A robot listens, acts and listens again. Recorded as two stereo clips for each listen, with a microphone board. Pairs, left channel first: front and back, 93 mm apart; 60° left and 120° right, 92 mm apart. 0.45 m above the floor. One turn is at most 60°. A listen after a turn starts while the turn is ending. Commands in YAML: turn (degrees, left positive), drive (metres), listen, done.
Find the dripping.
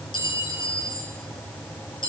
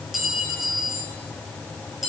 listen: true
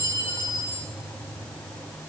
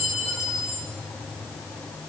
listen: true
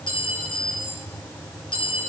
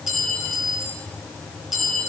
done: "I can't make out dripping, only a clink."